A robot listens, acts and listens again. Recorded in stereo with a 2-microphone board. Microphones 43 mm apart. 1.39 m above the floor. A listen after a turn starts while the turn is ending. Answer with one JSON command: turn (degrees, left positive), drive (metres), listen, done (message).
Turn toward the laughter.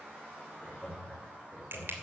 {"turn": 45}
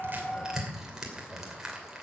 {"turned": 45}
{"listen": true}
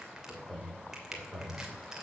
{"turn": 20}
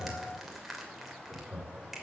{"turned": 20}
{"turn": 20}
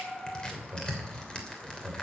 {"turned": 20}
{"done": "Found it: laughter, straight ahead."}